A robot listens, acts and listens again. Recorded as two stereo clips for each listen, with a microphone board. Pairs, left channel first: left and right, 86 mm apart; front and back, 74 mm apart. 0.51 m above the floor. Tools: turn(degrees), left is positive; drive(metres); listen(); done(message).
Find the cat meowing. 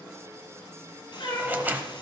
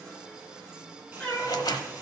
turn(degrees=75)
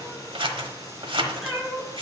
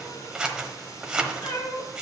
done("Found it: a cat meowing, straight ahead, 2 to 4 m away.")